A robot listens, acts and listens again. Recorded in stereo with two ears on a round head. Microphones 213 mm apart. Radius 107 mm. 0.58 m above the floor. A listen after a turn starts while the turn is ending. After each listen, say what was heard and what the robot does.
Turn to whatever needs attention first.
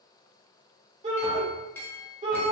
The shout: about 25° right or 155° right. Turn 25° right.
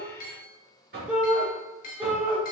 Facing the shout, 1 to 2 m away.